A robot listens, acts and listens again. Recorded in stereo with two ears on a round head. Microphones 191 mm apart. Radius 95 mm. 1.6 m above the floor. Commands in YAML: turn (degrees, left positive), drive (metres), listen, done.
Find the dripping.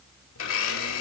listen: true
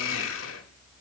listen: true
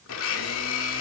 done: "I can't make out dripping, only a blender."